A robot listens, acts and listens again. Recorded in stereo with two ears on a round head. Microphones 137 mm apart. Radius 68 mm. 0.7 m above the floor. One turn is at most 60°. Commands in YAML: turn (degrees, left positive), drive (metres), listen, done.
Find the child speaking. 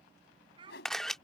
turn: -30
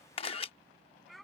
done: "Found it: a child speaking, straight ahead."